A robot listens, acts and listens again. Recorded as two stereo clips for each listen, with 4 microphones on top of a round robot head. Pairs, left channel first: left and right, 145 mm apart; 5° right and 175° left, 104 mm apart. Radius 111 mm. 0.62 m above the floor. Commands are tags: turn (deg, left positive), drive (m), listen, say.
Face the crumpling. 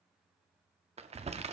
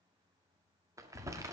<turn deg="-125"/>
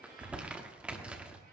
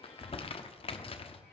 <turn deg="-10"/>
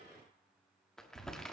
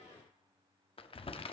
<say>Found it: crumpling, straight ahead.</say>